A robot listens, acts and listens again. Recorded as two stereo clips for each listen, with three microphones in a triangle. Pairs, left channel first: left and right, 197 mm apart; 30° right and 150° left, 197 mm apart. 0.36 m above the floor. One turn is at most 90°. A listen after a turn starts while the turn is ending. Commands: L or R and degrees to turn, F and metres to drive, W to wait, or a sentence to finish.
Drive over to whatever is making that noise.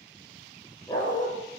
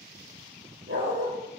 L90
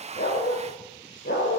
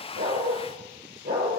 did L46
L90
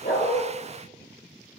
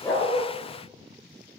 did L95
L20
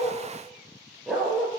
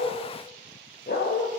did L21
F1.0
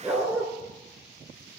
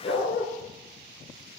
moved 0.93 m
R10
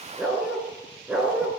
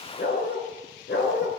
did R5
F1.0
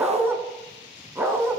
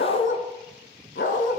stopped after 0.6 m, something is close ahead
R10
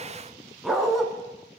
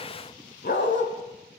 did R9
Arrived at the dog barking, straight ahead.